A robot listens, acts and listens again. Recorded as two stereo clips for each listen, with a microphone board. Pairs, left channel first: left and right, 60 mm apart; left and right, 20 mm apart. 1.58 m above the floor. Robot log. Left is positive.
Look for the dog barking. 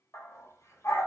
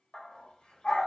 note: The dog barking: about 60° left or 120° left.
cmd yaw +60
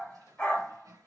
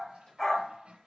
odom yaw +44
note: So it is at 30° left.
cmd yaw +30
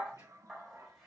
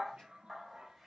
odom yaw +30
end: Found it: a dog barking, straight ahead.